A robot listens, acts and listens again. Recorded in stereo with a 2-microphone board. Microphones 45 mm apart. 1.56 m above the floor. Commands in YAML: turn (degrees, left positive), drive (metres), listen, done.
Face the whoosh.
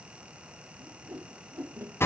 turn: -60
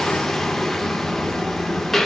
listen: true
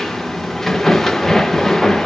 listen: true
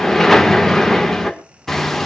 done: "I heard a whoosh, but can't make it out now. It was about straight ahead or 60° right."